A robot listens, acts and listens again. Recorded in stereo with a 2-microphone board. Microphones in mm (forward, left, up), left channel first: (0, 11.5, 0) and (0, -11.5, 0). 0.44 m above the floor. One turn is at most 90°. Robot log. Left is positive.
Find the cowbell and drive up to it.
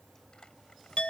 cmd idle
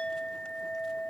cmd idle
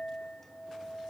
end: I can't make out a cowbell, only a clink.